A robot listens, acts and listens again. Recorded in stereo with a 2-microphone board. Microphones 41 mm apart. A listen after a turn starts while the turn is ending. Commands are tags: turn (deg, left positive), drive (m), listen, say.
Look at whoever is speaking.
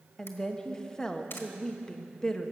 <turn deg="30"/>
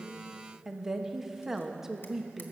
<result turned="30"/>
<turn deg="-15"/>
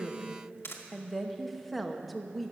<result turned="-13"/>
<say>Found it: a woman speaking, straight ahead, 1 to 2 m away.</say>